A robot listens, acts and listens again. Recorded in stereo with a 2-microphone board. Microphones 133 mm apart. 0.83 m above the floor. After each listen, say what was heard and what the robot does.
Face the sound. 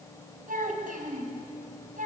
Turn 90° right.
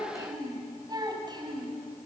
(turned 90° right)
So it is at 35° right. Turn 35° right.
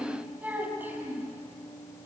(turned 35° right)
The child speaking is now 15° right. Turn 15° right.
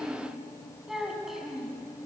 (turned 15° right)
Facing the child speaking, 2 to 4 m away.